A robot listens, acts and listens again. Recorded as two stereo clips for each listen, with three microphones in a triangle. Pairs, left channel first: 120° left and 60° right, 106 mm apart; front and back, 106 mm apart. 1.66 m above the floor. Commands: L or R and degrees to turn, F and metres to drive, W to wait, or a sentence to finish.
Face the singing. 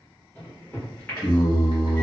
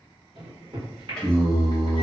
L90
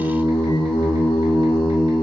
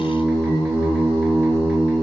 L70
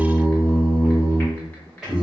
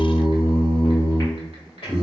L25
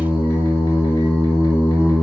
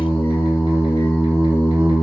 Found it: singing, straight ahead.